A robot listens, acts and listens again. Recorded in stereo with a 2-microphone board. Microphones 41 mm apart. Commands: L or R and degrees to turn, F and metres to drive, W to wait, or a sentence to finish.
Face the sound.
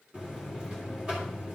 R20
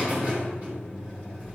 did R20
R140
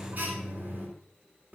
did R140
R45
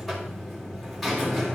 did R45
Facing the buzzer, 2 to 4 m away.